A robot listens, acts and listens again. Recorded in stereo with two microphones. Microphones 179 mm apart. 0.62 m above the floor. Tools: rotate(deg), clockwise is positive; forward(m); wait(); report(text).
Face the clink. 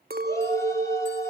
rotate(60)
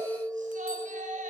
report("Facing the clink.")